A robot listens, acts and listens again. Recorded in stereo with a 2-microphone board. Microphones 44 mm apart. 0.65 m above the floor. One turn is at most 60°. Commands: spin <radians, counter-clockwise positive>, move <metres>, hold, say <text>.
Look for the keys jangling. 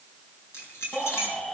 spin 1.05
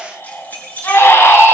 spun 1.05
spin 0.70
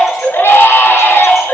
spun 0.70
hold
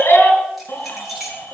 say Facing the keys jangling.